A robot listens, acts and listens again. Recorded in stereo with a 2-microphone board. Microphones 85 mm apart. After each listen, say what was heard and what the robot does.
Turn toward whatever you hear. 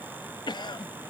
The cough: about 65° left or 115° left. Turn 65° left.
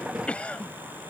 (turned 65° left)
So it is at 15° left. Turn 15° left.
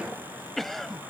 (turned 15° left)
Facing the cough.